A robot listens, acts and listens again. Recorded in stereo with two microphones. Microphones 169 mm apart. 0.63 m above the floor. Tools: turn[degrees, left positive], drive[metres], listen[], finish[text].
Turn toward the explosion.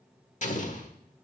Thought: The explosion: about 50° left or 130° left.
Action: turn[50]
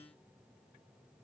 Action: listen[]
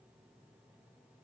Action: finish[I heard an explosion, but can't make it out now. It was about straight ahead or 80° left.]